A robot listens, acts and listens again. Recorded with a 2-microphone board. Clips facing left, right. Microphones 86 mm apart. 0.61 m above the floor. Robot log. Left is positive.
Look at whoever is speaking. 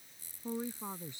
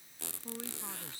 note: The woman speaking: about 20° left or 160° left.
cmd yaw +20
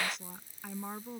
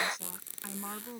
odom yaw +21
end: Facing the woman speaking.